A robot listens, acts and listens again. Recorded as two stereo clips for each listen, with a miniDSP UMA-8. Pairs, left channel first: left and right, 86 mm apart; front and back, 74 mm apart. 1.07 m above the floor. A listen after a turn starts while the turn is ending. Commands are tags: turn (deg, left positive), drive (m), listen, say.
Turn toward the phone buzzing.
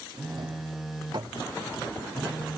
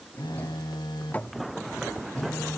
<say>Facing the phone buzzing.</say>